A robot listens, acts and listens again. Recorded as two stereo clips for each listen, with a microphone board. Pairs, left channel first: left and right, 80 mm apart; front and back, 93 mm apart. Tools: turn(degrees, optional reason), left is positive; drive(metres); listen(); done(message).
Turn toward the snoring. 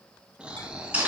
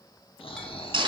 turn(degrees=-15, reason="The snoring: 15° right.")
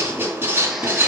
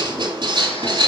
listen()
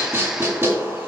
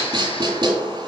listen()
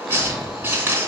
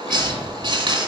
done("Found it: snoring, straight ahead, under 1 m away.")